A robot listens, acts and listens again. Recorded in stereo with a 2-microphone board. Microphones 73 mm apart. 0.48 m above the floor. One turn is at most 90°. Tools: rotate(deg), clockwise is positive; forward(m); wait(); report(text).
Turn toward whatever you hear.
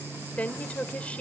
rotate(-20)
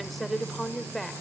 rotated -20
report("Facing the woman speaking.")